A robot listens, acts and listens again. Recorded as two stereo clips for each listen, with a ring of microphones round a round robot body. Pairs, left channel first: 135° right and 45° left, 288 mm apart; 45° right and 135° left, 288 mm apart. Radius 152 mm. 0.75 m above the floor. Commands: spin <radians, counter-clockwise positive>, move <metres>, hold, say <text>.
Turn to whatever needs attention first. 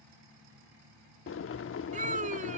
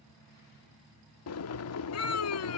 spin -0.35
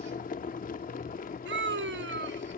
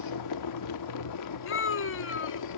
say Found it: a scream, straight ahead.